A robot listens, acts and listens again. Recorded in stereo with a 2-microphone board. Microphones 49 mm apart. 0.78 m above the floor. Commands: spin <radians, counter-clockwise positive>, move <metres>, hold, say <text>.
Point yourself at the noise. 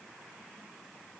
hold
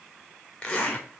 spin 0.52
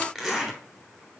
say Facing the zipper, 2 to 4 m away.